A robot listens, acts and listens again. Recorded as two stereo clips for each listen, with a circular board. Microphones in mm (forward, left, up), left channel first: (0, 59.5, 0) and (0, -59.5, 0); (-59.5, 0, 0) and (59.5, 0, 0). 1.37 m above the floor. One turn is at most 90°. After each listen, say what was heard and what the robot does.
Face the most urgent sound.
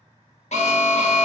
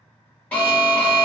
The alarm: 100° left. Turn 90° left.
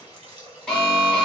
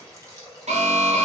Facing the alarm, under 1 m away.